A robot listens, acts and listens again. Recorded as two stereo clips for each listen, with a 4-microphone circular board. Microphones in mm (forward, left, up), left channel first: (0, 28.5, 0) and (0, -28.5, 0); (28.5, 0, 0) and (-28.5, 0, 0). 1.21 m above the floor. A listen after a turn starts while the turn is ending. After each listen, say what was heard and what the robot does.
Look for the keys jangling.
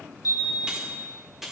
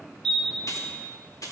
Facing the keys jangling.